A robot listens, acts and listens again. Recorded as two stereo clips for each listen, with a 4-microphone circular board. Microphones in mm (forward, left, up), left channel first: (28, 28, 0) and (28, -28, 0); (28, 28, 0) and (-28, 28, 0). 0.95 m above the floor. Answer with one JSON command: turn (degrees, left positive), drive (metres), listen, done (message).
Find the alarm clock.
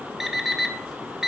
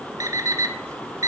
{"turn": -170}
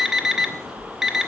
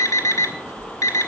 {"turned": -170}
{"done": "Facing the alarm clock, 1 to 2 m away."}